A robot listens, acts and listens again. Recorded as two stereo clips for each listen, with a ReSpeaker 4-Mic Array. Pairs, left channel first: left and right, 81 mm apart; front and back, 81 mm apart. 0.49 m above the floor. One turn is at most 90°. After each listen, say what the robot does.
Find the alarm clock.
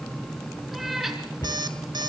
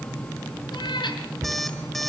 Turn 90° right.
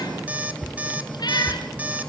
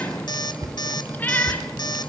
Turn 20° right.
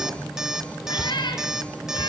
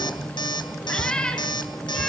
Facing the alarm clock.